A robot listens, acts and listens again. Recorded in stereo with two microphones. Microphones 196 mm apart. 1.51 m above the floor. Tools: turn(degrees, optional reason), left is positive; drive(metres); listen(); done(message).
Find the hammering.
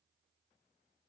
listen()
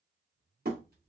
turn(degrees=-55, reason="The hammering: about 55° right or 125° right.")
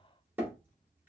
turn(degrees=-15, reason="So it is at 15° right.")
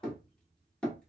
done("Found it: hammering, straight ahead, 1 to 2 m away.")